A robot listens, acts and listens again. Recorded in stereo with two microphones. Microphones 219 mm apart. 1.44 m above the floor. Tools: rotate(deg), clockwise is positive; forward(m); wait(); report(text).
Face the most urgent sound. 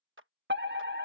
rotate(55)
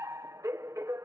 rotate(15)
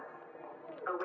report("Facing the fire alarm.")